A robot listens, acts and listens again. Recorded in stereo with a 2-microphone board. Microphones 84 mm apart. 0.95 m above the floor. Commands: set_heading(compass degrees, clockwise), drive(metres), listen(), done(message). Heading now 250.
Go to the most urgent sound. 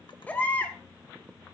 set_heading(230)
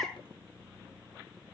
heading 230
drive(1.0)
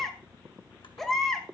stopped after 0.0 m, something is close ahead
done("Blocked. The baby crying is further on, straight ahead.")